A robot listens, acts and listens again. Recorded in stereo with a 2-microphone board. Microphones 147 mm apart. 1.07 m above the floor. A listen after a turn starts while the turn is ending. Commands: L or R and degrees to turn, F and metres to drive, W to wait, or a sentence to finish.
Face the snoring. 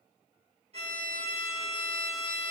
W
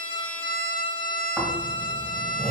L30
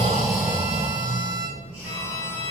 R15
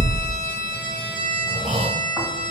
Facing the snoring.